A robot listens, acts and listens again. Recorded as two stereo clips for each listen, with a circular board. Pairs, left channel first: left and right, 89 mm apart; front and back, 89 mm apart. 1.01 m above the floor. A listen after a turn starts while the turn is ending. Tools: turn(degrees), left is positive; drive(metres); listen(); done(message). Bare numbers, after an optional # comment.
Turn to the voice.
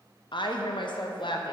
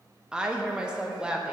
# The woman speaking: 100° left.
turn(100)
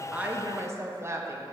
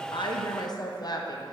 # The woman speaking is now 35° right.
turn(-35)
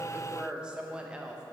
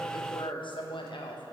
# The woman speaking is now 10° right.
turn(-10)
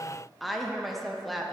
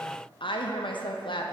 done("Facing the woman speaking.")